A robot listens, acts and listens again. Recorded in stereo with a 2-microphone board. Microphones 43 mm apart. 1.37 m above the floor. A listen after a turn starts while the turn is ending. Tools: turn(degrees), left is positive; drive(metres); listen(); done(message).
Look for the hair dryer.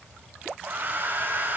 turn(degrees=-50)
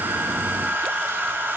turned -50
turn(degrees=-70)
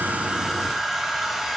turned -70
turn(degrees=-10)
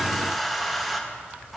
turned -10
done("Facing the hair dryer.")